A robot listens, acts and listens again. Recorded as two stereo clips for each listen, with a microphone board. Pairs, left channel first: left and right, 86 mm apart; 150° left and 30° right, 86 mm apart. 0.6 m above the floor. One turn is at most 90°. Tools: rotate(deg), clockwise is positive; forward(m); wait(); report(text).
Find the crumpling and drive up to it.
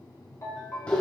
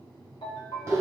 wait()
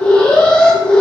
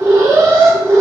wait()
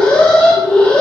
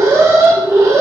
report("I can't make out crumpling to turn to.")